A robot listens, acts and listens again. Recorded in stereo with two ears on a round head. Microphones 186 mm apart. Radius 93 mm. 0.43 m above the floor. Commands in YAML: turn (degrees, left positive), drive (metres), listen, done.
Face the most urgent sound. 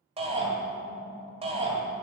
turn: -30
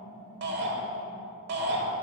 turn: -110
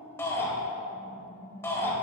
turn: 15
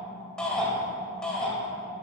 done: "Found it: a shout, straight ahead."